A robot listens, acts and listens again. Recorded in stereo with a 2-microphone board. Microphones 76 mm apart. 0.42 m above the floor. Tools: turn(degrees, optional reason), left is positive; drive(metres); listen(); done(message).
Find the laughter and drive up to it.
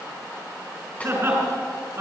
turn(degrees=-30, reason="The laughter: about 30° right or 150° right.")
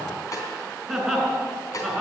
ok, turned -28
drive(metres=1.0)
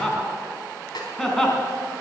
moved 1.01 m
drive(metres=1.0)
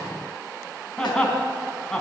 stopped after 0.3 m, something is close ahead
turn(degrees=10, reason="The laughter is now 10° left.")
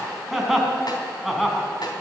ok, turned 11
done("Something is in my way. I am facing the laughter but have not reached it.")